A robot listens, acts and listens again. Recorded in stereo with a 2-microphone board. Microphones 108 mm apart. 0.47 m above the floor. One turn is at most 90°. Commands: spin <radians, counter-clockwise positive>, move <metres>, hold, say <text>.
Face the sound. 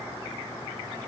hold
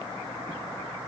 hold
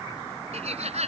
spin -1.57
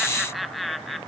say Found it: laughter, straight ahead.